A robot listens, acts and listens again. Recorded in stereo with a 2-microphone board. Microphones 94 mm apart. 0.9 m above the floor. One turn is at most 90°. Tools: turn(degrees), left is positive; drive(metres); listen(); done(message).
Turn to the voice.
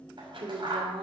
turn(degrees=-75)
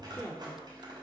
done("Found it: a woman speaking, straight ahead, 2 to 4 m away.")